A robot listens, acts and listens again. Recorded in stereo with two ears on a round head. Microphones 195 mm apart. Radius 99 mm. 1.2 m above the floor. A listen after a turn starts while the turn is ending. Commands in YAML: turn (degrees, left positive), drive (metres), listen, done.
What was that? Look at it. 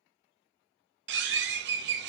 turn: -55
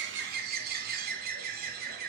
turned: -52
turn: -55
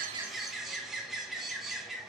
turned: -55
done: "Found it: a bird, straight ahead."